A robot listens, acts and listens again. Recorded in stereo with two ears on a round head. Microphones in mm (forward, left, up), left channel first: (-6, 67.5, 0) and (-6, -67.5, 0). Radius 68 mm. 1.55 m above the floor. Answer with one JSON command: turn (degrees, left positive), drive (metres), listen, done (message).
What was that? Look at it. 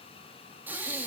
{"turn": -30}
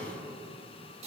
{"turn": -135}
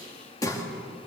{"turn": 25}
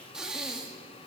{"done": "Facing the breathing, 2 to 4 m away."}